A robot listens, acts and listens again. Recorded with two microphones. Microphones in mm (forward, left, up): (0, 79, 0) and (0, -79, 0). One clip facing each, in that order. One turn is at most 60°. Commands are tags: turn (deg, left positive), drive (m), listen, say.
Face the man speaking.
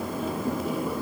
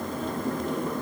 <listen/>
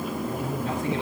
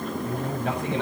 <turn deg="-60"/>
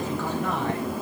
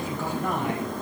<listen/>
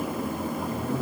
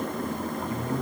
<listen/>
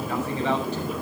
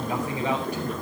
<say>I heard a man speaking, but can't make it out now. It was about 10° right or 50° right.</say>